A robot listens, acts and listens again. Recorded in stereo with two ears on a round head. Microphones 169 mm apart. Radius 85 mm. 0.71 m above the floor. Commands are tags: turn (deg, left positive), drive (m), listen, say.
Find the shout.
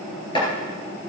<listen/>
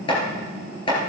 <listen/>
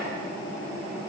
<say>I can't make out a shout to turn to.</say>